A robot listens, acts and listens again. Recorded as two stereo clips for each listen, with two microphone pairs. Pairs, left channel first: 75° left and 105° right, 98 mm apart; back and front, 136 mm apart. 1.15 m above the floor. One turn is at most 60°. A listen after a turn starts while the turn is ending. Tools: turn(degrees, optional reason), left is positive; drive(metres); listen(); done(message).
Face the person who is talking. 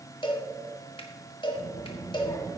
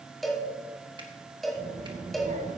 turn(degrees=20, reason="The child speaking: 20° left.")
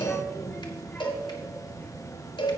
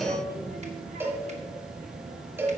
done("Facing the child speaking, 1 to 2 m away.")